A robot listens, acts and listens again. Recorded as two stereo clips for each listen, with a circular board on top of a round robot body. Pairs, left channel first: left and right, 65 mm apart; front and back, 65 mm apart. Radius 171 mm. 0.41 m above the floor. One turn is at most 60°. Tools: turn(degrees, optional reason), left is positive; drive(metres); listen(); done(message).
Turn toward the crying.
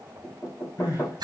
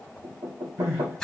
turn(degrees=60, reason="The crying: 125° left.")
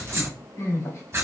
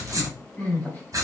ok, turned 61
turn(degrees=60, reason="The crying is now 65° left.")
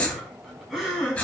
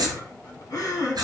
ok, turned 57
turn(degrees=10, reason="The crying is now 10° left.")
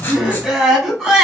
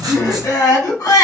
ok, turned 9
done("Found it: crying, straight ahead, 2 to 4 m away.")